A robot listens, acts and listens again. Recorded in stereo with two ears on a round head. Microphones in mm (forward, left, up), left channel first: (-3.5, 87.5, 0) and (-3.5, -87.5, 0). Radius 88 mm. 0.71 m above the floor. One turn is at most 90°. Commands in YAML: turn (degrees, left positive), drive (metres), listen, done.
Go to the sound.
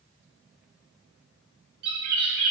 turn: -90
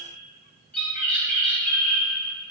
drive: 1.0
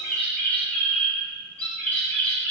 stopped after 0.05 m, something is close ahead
turn: 10
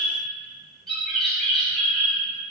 done: "Something is in my way. I am facing the bird but have not reached it."